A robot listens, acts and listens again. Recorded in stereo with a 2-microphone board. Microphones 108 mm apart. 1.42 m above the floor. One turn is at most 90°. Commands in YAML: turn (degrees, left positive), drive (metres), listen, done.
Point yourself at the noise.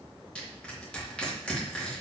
turn: 30
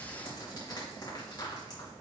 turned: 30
turn: 90
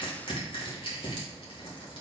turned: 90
turn: 55
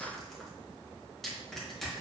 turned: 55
done: "Facing the crushing, 2 to 4 m away."